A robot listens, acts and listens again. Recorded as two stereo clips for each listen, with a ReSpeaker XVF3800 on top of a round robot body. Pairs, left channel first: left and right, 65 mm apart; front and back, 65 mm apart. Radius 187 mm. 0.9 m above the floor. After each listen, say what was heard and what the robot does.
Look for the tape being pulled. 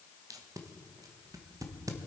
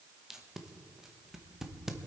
The tape being pulled: 95° right. Turn 95° right.
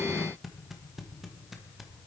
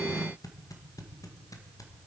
Found it: tape being pulled, straight ahead.